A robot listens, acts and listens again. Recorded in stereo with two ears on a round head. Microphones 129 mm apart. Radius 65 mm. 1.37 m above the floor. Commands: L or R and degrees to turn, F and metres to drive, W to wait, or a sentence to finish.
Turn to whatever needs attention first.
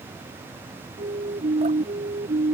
R45
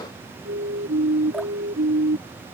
R90
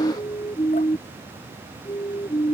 L30
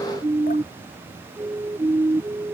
R15
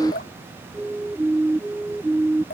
Facing the siren.